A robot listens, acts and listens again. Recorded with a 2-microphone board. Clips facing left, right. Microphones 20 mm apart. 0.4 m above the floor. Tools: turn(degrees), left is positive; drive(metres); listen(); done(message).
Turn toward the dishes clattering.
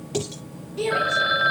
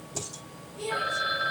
turn(degrees=90)
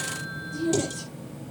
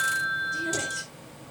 listen()
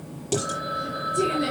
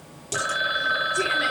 done("Facing the dishes clattering, over 4 m away.")